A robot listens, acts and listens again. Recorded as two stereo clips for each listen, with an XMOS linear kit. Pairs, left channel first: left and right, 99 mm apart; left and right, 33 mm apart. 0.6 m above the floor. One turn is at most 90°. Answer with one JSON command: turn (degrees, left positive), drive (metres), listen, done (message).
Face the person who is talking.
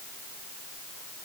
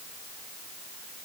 {"listen": true}
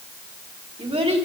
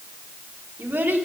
{"turn": -70}
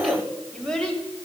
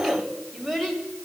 {"turn": 10}
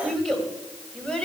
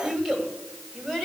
{"turn": 10}
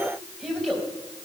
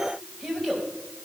{"done": "Found it: a child speaking, straight ahead."}